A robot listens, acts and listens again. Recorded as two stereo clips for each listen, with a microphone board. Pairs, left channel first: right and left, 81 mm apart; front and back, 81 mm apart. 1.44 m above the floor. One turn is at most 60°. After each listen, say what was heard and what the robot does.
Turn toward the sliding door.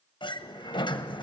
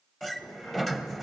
The sliding door: 85° right. Turn 60° right.
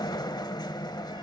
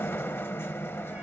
The sliding door is now 60° right. Turn 60° right.
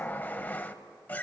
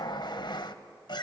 The sliding door is now 20° right. Turn 20° right.
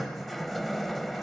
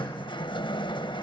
Found it: a sliding door, straight ahead.